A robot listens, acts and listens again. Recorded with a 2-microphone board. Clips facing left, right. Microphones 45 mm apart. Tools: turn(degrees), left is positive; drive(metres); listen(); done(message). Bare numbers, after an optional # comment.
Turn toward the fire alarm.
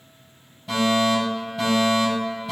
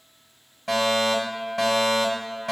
# The fire alarm: about 75° right or 105° right.
turn(-75)
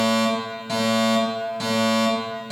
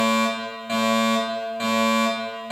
# So it is at 25° right.
turn(-25)
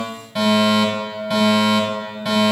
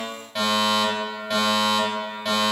done("Facing the fire alarm, over 4 m away.")